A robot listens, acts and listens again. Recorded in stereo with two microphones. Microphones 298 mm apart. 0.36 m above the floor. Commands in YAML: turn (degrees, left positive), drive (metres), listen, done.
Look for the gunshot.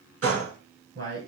turn: -50
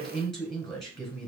listen: true
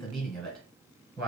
done: "I heard a gunshot, but can't make it out now. It was about straight ahead or 80° right."